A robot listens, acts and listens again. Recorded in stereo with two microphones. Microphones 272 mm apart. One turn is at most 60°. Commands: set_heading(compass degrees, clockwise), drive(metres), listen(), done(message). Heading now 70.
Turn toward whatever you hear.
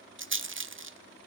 set_heading(115)
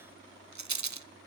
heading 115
set_heading(175)
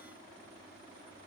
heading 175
set_heading(205)
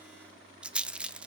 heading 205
done("Facing the rattle, under 1 m away.")